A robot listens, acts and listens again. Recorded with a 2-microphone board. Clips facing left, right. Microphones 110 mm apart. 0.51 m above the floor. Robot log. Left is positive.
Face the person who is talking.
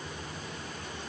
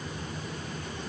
cmd idle
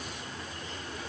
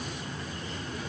cmd idle
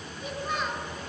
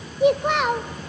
note: The child speaking: about 70° right or 110° right.
cmd yaw -70
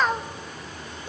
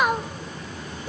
note: So it is at 10° right.
cmd yaw -10
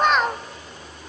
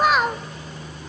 end: Facing the child speaking.